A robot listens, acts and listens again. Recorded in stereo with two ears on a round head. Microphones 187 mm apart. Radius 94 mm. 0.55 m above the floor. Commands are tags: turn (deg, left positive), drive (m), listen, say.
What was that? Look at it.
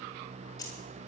<turn deg="15"/>
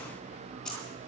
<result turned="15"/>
<say>Facing the keys jangling, over 4 m away.</say>